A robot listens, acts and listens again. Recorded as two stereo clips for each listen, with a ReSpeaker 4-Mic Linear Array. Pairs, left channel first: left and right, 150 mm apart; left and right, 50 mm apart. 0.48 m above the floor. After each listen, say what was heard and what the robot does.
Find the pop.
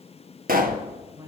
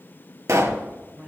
Turn 90° right.
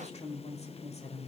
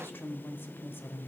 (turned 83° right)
I heard a pop from this way, but can't make it out now.